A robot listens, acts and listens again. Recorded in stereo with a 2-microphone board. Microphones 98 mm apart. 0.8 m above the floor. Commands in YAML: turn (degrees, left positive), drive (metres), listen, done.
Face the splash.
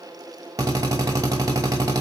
listen: true
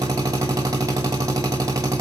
listen: true
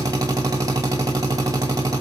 done: "I can't make out a splash, only a drill."